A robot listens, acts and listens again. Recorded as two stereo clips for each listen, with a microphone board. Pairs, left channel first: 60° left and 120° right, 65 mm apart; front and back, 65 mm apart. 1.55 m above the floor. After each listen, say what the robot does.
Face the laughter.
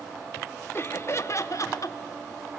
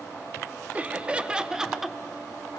Turn 95° left.
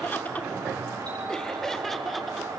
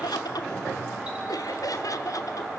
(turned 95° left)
Turn 25° right.
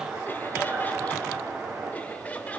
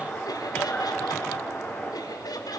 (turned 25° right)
Found it: laughter, straight ahead, 2 to 4 m away.